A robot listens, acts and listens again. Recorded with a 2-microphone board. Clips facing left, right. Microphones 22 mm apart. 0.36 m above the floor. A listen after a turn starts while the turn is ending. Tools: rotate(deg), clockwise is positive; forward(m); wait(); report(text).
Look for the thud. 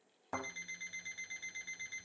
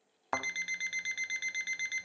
rotate(50)
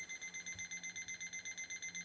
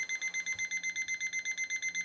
wait()
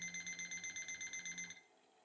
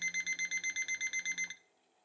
report("I heard a thud, but can't make it out now. It was about straight ahead or 80° right.")